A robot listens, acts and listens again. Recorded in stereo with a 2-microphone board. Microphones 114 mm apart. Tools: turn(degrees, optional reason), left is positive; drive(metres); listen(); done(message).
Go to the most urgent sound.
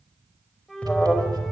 turn(degrees=30)
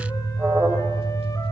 turn(degrees=-20, reason="So it is at 20° right.")
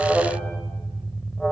drive(metres=1.0)
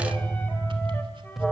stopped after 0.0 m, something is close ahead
done("Blocked. The alarm is further on, straight ahead.")